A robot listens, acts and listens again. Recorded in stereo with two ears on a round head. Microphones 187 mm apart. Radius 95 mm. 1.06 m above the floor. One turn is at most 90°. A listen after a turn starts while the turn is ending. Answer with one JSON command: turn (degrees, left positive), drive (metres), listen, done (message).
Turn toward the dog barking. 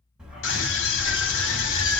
{"turn": -15}
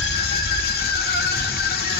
{"turn": -90}
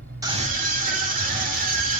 {"turn": -45}
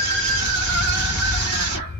{"turn": 50}
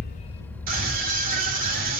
{"turn": 10}
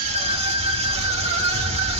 {"done": "Found it: a dog barking, straight ahead, 1 to 2 m away."}